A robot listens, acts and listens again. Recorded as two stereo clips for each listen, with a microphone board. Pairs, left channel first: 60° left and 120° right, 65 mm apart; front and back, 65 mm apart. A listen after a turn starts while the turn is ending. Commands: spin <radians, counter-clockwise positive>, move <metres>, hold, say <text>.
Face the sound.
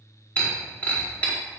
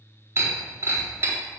spin 2.27
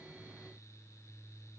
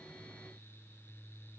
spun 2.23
say I heard breaking glass from this way, but can't make it out now.